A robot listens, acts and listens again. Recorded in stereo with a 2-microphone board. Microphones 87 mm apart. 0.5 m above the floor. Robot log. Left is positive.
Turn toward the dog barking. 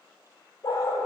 note: The dog barking: about 35° left or 145° left.
cmd yaw +35
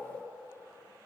cmd idle
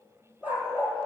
note: So it is at 20° right.
cmd yaw -20
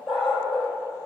note: The dog barking is now 10° right.
cmd yaw -10
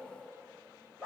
note: The dog barking is now 10° right.
cmd yaw -10
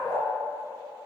end: Facing the dog barking, over 4 m away.